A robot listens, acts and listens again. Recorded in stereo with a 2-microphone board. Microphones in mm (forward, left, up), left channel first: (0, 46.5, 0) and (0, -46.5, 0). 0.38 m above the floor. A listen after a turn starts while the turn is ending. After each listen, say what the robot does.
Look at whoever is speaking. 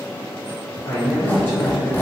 Turn 20° left.
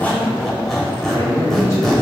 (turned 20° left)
Turn 135° left.
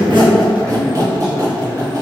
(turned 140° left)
Keep listening.
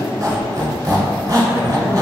Keep listening.
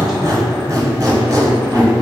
Facing where the man speaking came from. I can't hear it now.